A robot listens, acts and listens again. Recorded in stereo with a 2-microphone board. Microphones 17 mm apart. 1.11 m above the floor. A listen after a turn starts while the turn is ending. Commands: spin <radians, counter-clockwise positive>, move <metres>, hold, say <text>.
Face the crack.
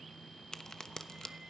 spin 0.70
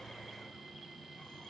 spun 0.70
hold
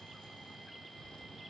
say I heard a crack, but can't make it out now. It was about straight ahead or 100° left.